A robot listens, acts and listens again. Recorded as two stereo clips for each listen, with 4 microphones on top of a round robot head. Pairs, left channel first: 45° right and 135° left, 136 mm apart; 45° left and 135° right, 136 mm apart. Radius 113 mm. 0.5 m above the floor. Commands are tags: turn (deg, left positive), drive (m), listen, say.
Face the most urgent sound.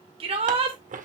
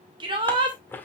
<turn deg="175"/>
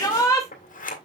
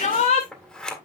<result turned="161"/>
<turn deg="15"/>
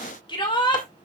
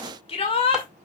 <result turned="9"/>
<say>Found it: a shout, straight ahead, 2 to 4 m away.</say>